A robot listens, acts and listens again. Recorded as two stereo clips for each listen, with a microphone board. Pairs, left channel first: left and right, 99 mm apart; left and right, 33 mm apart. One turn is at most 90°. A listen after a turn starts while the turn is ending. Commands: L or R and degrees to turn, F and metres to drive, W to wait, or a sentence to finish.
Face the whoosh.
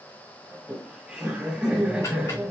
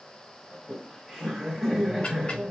W
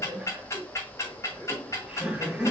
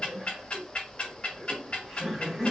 W
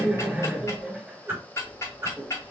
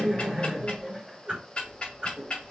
R25
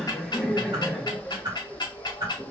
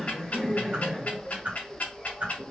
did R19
R90
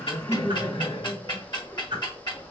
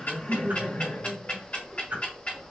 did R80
R55
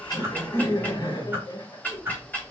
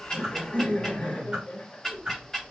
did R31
R20
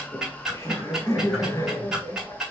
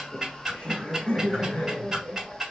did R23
W
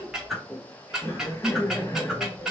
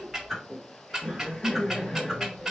Found it: a whoosh, straight ahead.